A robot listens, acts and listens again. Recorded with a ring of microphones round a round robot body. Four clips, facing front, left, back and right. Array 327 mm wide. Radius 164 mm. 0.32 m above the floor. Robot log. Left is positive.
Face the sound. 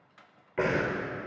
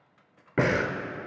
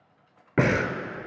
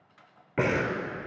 note: The breathing: 160° left.
cmd yaw +160
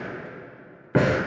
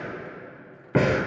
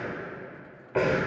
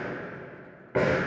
note: The breathing is now 35° left.
cmd yaw +35
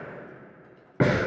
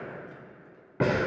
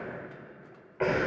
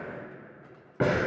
end: Found it: breathing, straight ahead, 1 to 2 m away.